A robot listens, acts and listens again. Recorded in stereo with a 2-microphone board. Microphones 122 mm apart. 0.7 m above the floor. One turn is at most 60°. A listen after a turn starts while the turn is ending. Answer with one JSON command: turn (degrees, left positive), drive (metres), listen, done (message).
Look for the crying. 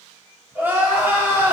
{"turn": -15}
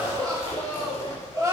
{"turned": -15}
{"turn": -60}
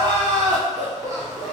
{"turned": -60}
{"turn": -60}
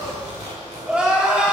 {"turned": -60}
{"turn": -10}
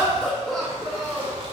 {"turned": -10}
{"done": "Found it: crying, straight ahead, 1 to 2 m away."}